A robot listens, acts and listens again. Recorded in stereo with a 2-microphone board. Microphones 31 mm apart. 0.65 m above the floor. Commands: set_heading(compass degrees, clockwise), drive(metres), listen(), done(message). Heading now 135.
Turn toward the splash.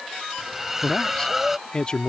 set_heading(165)
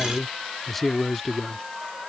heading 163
listen()
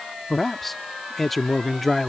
done("I heard a splash, but can't make it out now. It was about 20° left or 145° right.")